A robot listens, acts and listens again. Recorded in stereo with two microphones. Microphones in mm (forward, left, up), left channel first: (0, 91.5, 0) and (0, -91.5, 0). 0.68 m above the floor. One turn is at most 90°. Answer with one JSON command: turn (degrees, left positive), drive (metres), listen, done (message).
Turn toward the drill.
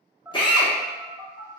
{"turn": 25}
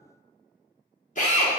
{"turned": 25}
{"turn": 90}
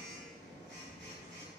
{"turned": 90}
{"turn": 40}
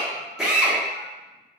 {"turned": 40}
{"done": "Facing the drill."}